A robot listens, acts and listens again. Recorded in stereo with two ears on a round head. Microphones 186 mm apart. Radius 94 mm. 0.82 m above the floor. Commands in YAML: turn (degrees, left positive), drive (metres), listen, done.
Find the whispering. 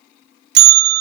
listen: true
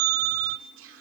turn: -70
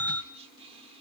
turn: -30
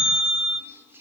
turn: -10
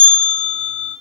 listen: true
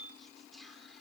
done: "Found it: whispering, straight ahead, 2 to 4 m away."